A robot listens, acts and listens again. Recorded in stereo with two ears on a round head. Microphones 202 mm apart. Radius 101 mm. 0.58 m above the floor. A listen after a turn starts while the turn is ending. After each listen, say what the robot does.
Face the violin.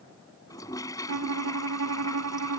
Turn 90° right.
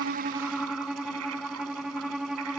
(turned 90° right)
Found it: a violin, straight ahead.